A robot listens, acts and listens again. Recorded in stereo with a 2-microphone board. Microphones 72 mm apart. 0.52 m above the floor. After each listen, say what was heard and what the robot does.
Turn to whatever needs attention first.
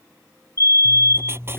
The fire alarm: about 45° left or 135° left. Turn 45° left.
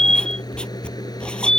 So it is at 10° left. Turn 10° left.
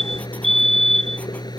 Facing the fire alarm.